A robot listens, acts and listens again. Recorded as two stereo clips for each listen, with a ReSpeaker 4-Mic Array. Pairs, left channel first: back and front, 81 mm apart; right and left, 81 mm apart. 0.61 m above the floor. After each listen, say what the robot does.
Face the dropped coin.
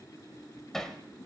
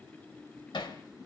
Keep listening.
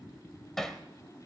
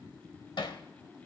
Keep listening.
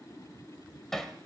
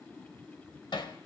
I can't make out a dropped coin to turn to.